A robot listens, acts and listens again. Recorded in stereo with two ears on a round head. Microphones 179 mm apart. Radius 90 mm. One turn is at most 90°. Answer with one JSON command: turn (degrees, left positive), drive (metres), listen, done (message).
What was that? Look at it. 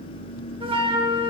{"turn": -25}
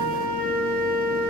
{"turn": -90}
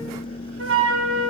{"turn": -65}
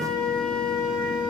{"done": "Facing the flute."}